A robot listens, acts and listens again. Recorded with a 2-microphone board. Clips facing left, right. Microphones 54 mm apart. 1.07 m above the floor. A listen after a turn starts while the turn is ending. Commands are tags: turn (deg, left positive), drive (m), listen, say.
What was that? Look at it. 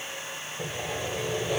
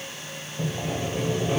<turn deg="-45"/>
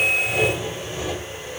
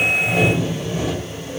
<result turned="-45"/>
<turn deg="-85"/>
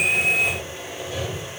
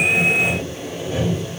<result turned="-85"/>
<turn deg="-35"/>
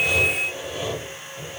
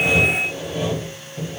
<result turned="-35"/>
<say>Facing the sawing.</say>